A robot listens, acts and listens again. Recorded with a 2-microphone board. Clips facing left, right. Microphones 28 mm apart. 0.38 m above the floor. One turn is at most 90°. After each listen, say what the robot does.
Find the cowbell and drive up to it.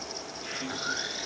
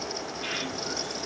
Keep listening.
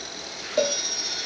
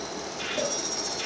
Turn 65° left.
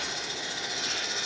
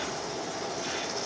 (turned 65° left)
Keep listening.
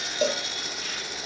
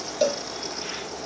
Drive 1.0 m forward.
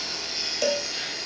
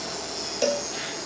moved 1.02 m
Drive 1.0 m forward.
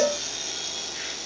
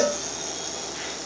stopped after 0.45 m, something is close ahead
Arrived at the cowbell, straight ahead.